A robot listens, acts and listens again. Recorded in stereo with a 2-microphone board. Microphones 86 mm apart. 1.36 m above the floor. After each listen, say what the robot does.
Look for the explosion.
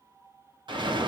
Turn 65° right.
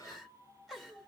Keep listening.
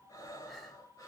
I heard an explosion, but can't make it out now. It was about straight ahead or 50° right.